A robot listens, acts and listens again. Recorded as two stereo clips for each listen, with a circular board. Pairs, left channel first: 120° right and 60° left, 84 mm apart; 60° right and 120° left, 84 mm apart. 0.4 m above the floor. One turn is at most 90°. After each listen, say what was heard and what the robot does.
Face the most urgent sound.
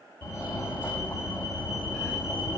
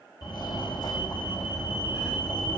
The fire alarm: 60° right. Turn 60° right.
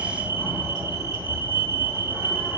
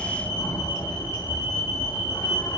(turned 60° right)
Found it: a fire alarm, straight ahead, 2 to 4 m away.